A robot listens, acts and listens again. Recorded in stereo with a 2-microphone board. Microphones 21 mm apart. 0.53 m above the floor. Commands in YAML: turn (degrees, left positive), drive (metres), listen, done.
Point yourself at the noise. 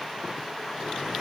listen: true
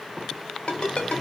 turn: 50
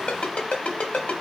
turn: 80
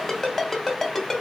turn: 10
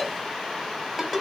done: "Found it: a ringtone, straight ahead."